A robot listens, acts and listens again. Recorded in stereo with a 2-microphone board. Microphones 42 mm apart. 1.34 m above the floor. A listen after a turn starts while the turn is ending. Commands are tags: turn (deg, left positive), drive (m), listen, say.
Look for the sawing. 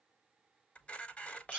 <listen/>
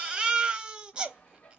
<turn deg="35"/>
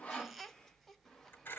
<listen/>
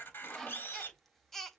<turn deg="10"/>
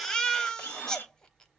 <listen/>
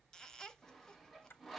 <say>Found it: sawing, straight ahead.</say>